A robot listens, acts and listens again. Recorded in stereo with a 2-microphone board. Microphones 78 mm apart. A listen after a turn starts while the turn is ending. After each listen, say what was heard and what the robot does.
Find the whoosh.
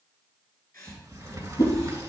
The whoosh: about 45° left or 135° left. Turn 45° left.
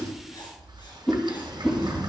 Facing the whoosh, 2 to 4 m away.